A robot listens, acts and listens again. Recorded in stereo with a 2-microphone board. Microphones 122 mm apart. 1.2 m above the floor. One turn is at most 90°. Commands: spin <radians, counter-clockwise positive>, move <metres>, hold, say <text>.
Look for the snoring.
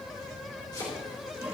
hold
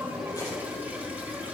hold
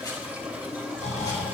spin 1.57
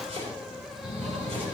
say Facing the snoring.